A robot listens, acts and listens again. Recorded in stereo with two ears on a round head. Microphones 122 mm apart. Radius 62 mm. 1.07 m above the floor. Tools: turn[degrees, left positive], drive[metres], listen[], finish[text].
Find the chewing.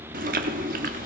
Thought: The chewing: about 75° right or 105° right.
Action: turn[-75]
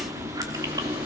Thought: So it is at 25° right.
Action: turn[-25]
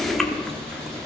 Action: finish[Found it: chewing, straight ahead.]